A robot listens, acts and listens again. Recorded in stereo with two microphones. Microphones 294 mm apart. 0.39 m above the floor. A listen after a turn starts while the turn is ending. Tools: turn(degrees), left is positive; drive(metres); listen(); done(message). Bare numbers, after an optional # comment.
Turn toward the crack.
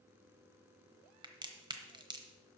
# The crack: about 15° right or 165° right.
turn(-15)
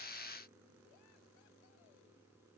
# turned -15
listen()
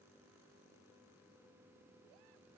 done("I heard a crack, but can't make it out now. It was about straight ahead or 150° right.")